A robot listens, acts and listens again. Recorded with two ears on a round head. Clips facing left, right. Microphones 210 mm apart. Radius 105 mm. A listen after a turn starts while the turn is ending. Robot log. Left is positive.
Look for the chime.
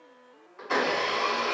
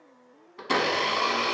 cmd idle
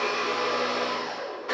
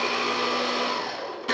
cmd idle
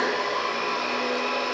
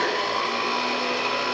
end: I can't make out a chime to turn to.